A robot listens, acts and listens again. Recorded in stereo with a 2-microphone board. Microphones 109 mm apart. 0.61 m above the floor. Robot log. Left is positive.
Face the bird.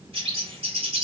note: The bird: about 60° right or 120° right.
cmd yaw -60
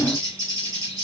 note: So it is at 35° right.
cmd yaw -35
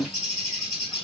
end: Found it: a bird, straight ahead.